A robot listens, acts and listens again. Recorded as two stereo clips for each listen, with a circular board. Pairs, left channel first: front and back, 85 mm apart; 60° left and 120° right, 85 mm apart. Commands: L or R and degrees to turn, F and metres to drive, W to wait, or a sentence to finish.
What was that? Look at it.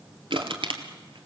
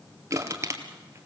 R175
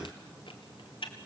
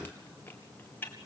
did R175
Found it: crushing, straight ahead.